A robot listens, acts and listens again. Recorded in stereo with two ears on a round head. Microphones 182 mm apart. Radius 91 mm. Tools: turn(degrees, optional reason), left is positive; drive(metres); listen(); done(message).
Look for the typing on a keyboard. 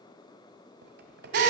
turn(degrees=-55, reason="The typing on a keyboard: about 55° right or 125° right.")
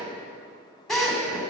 listen()
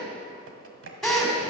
turn(degrees=-70, reason="So it is at 70° right.")
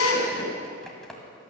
done("Facing the typing on a keyboard.")